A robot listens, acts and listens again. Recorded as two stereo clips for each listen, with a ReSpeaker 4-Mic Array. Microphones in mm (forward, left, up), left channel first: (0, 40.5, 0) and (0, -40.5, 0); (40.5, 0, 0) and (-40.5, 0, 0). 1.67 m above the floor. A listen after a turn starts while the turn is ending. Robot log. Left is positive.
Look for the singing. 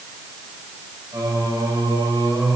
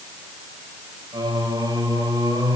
note: The singing: 135° right.
cmd yaw -135
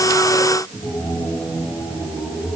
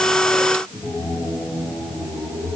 note: The singing is now 50° left.
cmd yaw +50
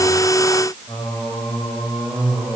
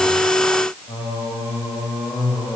end: Facing the singing.